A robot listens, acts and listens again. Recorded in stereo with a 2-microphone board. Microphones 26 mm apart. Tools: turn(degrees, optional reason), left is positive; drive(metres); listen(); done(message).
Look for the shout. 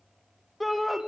turn(degrees=30)
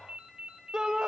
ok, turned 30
turn(degrees=-25, reason="So it is at 25° right.")
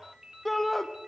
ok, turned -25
turn(degrees=10, reason="The shout is now 10° left.")
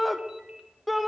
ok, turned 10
done("Facing the shout.")